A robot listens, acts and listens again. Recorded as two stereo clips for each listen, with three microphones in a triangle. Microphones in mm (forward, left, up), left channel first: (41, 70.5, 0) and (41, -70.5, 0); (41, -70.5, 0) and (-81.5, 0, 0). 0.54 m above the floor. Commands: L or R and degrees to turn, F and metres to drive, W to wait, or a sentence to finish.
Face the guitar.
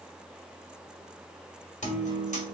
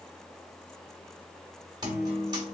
L95
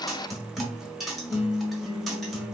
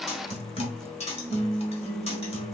Facing the guitar.